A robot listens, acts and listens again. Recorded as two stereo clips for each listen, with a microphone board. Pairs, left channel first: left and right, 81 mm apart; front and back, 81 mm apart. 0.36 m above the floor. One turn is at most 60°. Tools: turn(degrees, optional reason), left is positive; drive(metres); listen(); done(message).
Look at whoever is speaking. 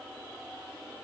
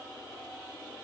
listen()
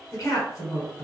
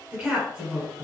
turn(degrees=60, reason="The woman speaking: 110° left.")
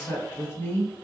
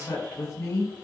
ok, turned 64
turn(degrees=45, reason="The woman speaking is now 45° left.")
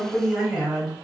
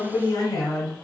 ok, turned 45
done("Facing the woman speaking.")